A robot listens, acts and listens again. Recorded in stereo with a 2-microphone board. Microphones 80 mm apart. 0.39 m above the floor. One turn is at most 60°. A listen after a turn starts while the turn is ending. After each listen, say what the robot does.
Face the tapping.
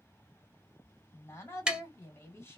Turn 30° right.
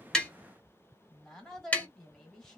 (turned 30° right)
Turn 20° left.
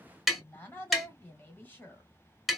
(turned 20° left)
Facing the tapping.